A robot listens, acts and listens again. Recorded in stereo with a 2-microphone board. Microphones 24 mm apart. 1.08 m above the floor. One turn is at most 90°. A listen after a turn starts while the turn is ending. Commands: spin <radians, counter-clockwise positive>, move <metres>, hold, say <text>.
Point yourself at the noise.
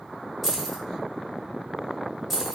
spin 0.52
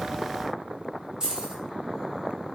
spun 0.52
spin -0.44
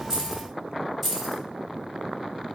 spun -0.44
say Facing the keys jangling, under 1 m away.